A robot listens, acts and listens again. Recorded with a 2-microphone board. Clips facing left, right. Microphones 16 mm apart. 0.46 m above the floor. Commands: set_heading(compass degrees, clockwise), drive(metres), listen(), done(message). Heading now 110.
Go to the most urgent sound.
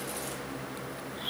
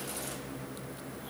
listen()
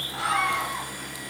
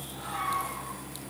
set_heading(45)
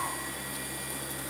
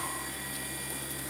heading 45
listen()
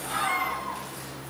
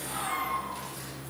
set_heading(5)
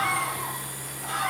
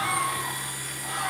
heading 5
set_heading(350)
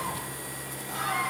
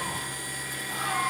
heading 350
drive(1.0)
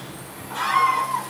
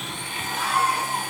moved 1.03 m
set_heading(335)
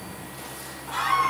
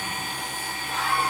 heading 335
drive(1.0)
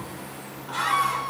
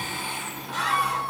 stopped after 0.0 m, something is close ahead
done("I am next to the scream.")